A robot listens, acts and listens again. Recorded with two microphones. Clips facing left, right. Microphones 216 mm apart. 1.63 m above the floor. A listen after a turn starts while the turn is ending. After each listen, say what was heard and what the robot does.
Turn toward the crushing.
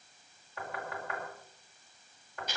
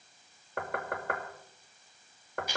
Keep listening.
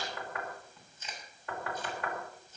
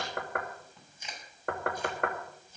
Keep listening.
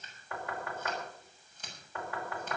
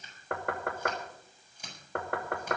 I can't make out crushing, only chewing and knocking.